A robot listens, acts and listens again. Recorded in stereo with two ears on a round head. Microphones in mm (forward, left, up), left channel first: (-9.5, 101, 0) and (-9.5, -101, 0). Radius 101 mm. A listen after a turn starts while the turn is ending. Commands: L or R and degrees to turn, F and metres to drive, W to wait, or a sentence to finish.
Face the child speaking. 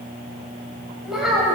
L30
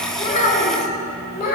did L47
L135
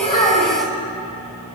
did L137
Facing the child speaking.